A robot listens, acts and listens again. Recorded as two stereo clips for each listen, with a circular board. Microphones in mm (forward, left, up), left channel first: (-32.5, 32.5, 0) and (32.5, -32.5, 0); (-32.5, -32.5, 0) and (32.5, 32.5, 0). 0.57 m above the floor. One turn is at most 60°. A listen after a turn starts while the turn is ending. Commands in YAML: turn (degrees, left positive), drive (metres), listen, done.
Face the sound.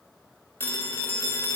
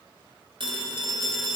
turn: 60
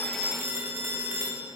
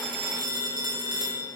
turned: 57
turn: 15
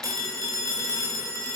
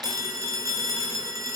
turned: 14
done: "Facing the phone ringing, 1 to 2 m away."